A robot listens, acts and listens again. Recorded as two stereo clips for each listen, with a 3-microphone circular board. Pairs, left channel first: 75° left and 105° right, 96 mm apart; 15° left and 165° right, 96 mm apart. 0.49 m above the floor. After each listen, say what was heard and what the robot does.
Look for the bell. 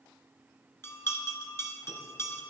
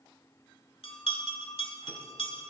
The bell: 10° left. Turn 10° left.
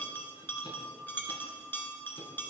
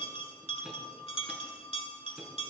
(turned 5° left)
Facing the bell.